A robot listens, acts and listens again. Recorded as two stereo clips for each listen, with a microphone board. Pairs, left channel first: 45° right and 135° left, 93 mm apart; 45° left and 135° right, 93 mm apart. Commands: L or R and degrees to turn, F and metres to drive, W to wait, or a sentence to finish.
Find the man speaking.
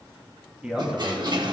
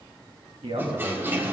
R145
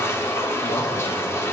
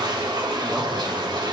W
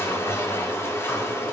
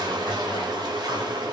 W
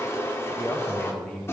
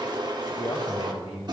L35
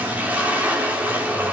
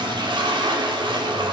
W
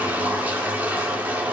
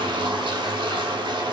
W
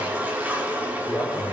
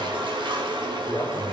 Facing where the man speaking came from. I can't hear it now.